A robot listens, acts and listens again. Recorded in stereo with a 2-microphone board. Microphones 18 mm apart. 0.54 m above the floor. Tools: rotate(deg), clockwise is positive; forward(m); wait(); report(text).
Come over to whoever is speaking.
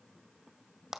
wait()
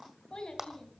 rotate(-40)
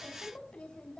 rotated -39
rotate(-100)
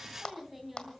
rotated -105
forward(1.0)
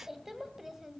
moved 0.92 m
rotate(15)
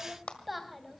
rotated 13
forward(1.0)
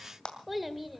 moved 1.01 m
forward(1.0)
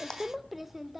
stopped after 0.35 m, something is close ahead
rotate(10)
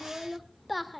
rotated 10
report("Arrived at the child speaking, straight ahead.")